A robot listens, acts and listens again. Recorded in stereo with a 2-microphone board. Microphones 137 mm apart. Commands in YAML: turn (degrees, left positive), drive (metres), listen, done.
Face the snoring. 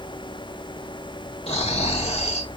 turn: 50
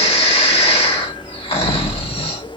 turn: 65
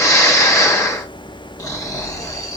turn: 30
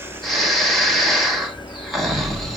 done: "Found it: snoring, straight ahead, 1 to 2 m away."